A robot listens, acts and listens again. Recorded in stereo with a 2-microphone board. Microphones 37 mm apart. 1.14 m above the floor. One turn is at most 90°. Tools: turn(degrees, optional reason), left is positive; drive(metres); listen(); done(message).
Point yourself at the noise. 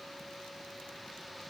listen()
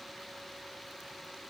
listen()
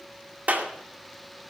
turn(degrees=-55, reason="The clap: about 55° right or 125° right.")
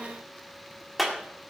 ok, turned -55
done("Facing the clap.")